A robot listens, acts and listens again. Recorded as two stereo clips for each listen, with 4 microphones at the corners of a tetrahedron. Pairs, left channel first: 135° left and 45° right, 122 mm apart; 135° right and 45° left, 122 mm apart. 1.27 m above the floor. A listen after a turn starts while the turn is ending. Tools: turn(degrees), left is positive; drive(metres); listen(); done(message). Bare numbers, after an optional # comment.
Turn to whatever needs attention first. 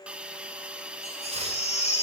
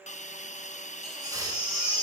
# The baby crying: 105° left.
turn(105)
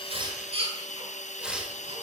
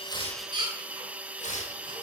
done("Found it: a baby crying, straight ahead, over 4 m away.")